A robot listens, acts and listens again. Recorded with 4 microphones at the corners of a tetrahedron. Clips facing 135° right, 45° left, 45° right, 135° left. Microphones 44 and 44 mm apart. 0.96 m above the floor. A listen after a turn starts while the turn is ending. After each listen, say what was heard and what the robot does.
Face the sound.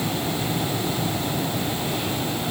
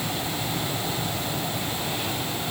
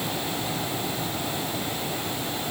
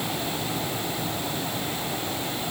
Keep listening.
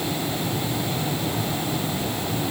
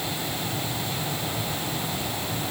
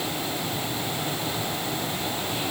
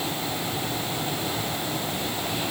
Keep listening.
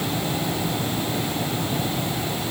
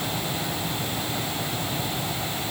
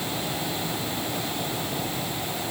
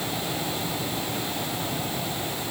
I can't make out anything.